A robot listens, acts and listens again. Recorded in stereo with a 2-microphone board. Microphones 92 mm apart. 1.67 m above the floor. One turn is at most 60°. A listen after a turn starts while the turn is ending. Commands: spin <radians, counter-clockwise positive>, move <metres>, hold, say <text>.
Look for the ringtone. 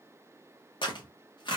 hold
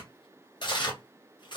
hold
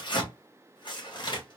say I can't make out a ringtone, only tearing paper.